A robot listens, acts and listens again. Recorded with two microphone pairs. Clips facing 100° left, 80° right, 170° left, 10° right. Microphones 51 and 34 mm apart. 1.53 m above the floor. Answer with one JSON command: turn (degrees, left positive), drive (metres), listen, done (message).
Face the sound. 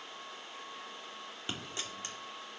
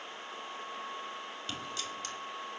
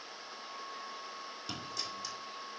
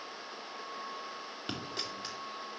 {"turn": 40}
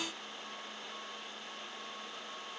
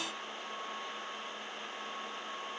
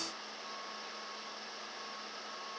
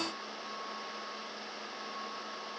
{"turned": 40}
{"done": "I heard a dropped coin from this way, but can't make it out now."}